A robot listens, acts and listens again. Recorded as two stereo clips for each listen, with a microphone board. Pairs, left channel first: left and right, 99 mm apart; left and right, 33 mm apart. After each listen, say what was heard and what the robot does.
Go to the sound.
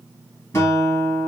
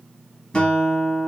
The guitar: about 30° left or 150° left. Turn 30° left.
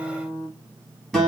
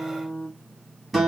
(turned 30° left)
Drive 1.0 m forward.
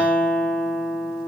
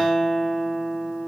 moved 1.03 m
The guitar is now 10° left. Turn 10° left.
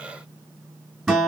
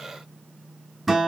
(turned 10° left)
Drive 1.0 m forward.
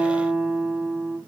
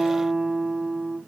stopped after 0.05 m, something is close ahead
The guitar is now 10° right. Turn 10° right.
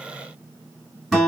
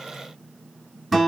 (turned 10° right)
Arrived at the guitar, straight ahead.